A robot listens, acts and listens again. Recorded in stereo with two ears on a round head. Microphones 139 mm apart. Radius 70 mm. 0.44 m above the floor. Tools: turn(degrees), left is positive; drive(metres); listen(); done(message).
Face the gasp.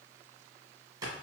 listen()
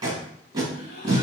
turn(degrees=55)
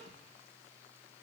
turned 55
listen()
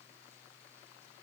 done("I heard a gasp, but can't make it out now. It was about straight ahead or 70° left.")